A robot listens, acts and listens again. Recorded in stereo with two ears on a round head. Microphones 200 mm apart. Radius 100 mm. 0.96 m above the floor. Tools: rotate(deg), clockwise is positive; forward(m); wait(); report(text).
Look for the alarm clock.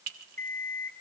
rotate(-30)
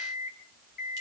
rotate(-140)
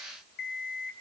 rotate(-50)
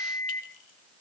rotate(-15)
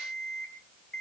report("Facing the alarm clock, 2 to 4 m away.")